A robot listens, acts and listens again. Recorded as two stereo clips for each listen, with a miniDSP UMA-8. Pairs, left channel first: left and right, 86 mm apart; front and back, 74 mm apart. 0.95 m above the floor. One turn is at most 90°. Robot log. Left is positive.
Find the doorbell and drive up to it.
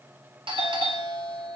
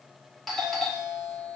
note: The doorbell: 85° right.
cmd yaw -85
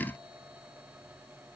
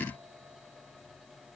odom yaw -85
cmd idle
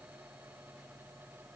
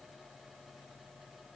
cmd idle
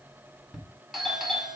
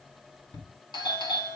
cmd fwd 1.0
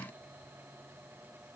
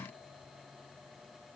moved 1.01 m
cmd idle
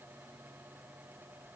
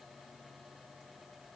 cmd idle
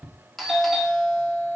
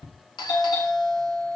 cmd fwd 1.0
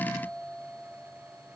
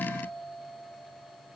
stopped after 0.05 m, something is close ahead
cmd idle
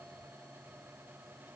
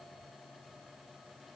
cmd idle
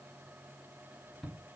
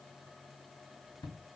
end: Blocked. The doorbell is further on, straight ahead.